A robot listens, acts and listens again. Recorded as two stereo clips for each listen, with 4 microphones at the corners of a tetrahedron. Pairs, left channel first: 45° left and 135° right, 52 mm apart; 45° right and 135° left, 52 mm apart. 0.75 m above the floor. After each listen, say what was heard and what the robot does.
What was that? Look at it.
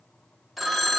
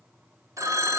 The phone ringing: 135° left. Turn 135° left.
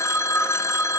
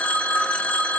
The phone ringing is now 20° left. Turn 20° left.
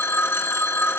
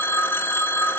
Facing the phone ringing, under 1 m away.